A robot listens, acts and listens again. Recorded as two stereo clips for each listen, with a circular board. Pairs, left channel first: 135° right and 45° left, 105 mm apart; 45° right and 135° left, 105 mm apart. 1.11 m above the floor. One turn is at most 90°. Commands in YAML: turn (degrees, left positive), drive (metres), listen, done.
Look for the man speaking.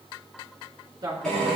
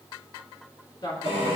done: "Found it: a man speaking, straight ahead."